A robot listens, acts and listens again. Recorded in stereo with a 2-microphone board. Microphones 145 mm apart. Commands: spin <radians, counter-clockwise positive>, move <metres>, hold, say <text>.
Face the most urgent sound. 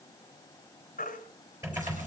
spin 1.22
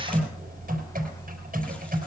hold
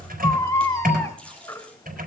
spin 0.44
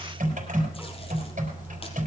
hold
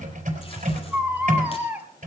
spin -0.17
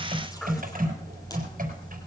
hold
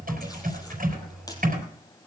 hold
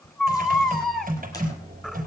say Found it: a baby crying, straight ahead, 1 to 2 m away.